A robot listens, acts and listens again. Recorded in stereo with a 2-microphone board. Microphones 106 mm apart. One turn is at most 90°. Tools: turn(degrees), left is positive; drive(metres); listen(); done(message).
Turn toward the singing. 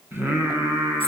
turn(degrees=-25)
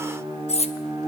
turn(degrees=-90)
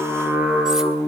turn(degrees=-15)
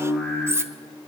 turn(degrees=10)
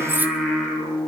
done("Facing the singing, over 4 m away.")